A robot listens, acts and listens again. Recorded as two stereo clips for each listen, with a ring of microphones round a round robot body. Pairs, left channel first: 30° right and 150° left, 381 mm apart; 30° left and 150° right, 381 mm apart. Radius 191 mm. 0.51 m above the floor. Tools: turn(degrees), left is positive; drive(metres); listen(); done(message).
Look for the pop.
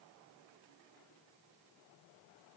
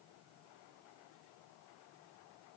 listen()
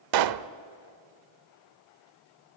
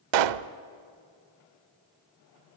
turn(degrees=-175)
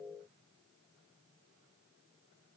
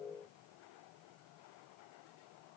done("I heard a pop from this way, but can't make it out now.")